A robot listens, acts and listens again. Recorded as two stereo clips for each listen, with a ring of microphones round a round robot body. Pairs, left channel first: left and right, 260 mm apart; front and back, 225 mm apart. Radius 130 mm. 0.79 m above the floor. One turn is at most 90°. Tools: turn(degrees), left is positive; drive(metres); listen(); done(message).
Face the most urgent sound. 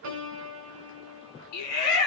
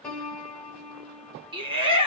turn(degrees=90)
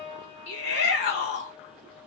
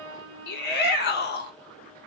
turn(degrees=40)
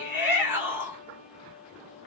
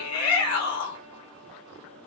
turn(degrees=-10)
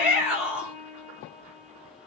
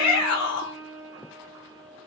done("Found it: a shout, straight ahead, 1 to 2 m away.")